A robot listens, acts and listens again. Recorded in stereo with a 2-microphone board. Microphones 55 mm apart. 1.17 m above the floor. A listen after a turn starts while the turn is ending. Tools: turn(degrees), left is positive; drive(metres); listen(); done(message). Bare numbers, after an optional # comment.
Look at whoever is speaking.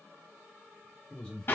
# The man speaking: about 20° left or 160° left.
turn(20)
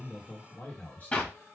# So it is at 140° left.
turn(140)
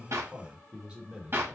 # The man speaking is now 20° right.
turn(-20)
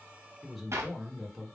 done("Found it: a man speaking, straight ahead.")